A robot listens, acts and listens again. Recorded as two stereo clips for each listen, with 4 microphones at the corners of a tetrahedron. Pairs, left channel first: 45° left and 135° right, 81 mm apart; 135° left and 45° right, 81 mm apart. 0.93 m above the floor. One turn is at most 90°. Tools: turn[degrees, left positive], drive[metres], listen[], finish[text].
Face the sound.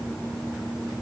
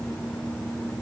Action: listen[]
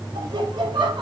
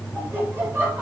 Thought: The laughter: 110° right.
Action: turn[-90]
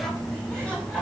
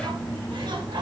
Thought: The laughter is now 35° right.
Action: turn[-35]
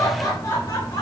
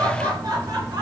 Action: finish[Found it: laughter, straight ahead, over 4 m away.]